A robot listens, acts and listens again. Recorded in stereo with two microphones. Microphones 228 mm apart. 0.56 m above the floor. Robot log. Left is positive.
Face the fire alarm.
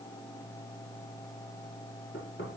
cmd idle
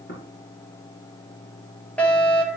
cmd yaw +30
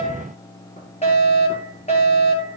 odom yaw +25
note: So it is at 150° left.
cmd yaw +150
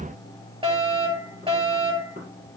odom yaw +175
note: The fire alarm is now 25° right.
cmd yaw -25
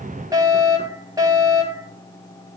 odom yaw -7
note: The fire alarm is now 15° right.
cmd yaw -15
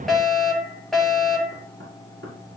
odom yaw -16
end: Facing the fire alarm, over 4 m away.